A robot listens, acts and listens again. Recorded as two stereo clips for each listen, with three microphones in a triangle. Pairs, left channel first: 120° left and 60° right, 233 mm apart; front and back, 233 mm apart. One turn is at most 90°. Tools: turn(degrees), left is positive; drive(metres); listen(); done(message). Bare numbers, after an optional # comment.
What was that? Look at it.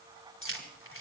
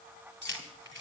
# The keys jangling: 145° left.
turn(90)
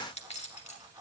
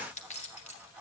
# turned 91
# The keys jangling is now 60° left.
turn(60)
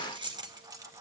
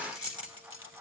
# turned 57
# The keys jangling is now 15° left.
turn(15)
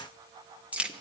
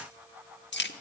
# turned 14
# The keys jangling is now 25° left.
turn(25)
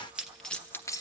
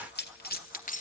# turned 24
# The keys jangling is now 50° left.
turn(50)
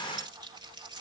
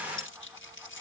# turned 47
listen()
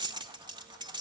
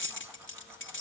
# The keys jangling is now 10° left.
turn(10)
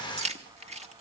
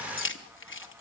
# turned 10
done("Facing the keys jangling.")